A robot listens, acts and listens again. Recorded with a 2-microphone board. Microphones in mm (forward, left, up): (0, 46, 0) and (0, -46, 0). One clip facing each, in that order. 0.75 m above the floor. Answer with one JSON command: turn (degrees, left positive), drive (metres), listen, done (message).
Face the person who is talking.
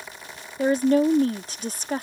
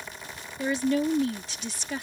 {"turn": 45}
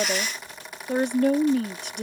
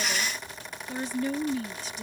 {"turn": 85}
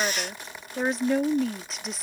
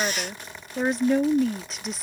{"done": "Facing the woman speaking."}